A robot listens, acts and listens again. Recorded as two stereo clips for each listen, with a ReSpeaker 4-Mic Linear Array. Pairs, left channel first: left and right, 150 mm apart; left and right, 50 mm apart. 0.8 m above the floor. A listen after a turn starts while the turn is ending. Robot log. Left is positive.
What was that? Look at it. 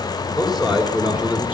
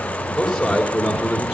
cmd yaw -30
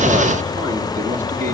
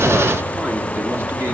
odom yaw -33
note: So it is at 120° right.
cmd yaw -120
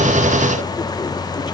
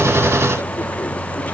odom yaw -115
cmd idle
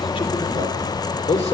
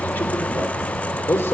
note: The man speaking is now 50° left.
cmd yaw +50
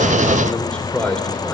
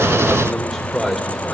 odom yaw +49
end: Found it: a man speaking, straight ahead.